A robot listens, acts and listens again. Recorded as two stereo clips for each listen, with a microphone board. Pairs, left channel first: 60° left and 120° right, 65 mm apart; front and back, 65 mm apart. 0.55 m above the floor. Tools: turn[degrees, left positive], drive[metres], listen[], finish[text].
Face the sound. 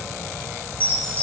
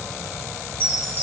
Thought: The chime: 125° left.
Action: turn[125]
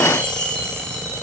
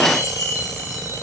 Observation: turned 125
Thought: The chime is now 15° right.
Action: turn[-15]
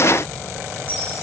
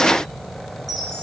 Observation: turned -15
Action: listen[]
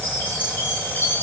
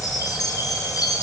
Action: finish[Found it: a chime, straight ahead.]